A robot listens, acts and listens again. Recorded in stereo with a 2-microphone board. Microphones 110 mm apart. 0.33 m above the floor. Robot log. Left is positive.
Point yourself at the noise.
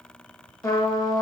note: The trumpet: about 30° left or 150° left.
cmd yaw +30
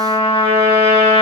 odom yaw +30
note: So it is at 115° left.
cmd yaw +115
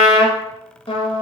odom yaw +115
note: The trumpet is now 50° left.
cmd yaw +50
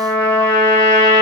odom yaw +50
note: The trumpet is now 15° left.
cmd yaw +15
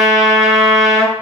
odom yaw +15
end: Found it: a trumpet, straight ahead.